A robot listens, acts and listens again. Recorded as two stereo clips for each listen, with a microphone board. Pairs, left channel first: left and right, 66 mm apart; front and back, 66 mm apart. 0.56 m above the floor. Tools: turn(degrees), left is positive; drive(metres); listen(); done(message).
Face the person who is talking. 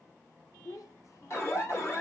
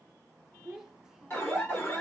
turn(degrees=100)
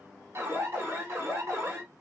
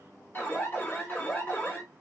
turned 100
listen()
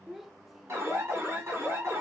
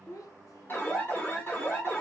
done("Found it: a child speaking, straight ahead.")